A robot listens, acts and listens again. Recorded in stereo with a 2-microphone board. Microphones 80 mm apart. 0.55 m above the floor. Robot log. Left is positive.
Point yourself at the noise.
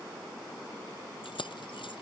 cmd yaw +90
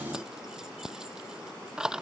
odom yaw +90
note: So it is at 10° right.
cmd yaw -10
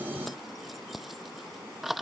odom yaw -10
end: Facing the keys jangling.